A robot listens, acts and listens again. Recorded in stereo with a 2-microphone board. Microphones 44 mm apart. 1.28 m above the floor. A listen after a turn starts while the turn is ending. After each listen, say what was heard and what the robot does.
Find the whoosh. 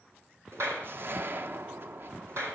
The whoosh: about 55° right or 125° right. Turn 55° right.
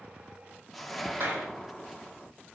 Facing the whoosh.